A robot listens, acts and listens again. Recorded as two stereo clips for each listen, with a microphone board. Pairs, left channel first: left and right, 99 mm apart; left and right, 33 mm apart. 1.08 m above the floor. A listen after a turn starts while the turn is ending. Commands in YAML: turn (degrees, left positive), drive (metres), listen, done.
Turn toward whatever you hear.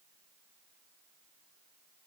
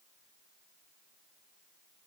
listen: true
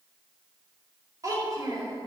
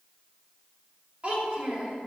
turn: -40
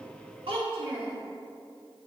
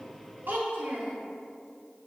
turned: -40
turn: -100
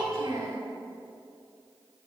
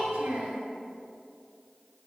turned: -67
turn: -35
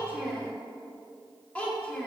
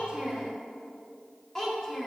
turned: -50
turn: 15
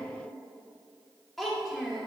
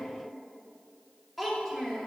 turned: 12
done: "Found it: a child speaking, straight ahead, 2 to 4 m away."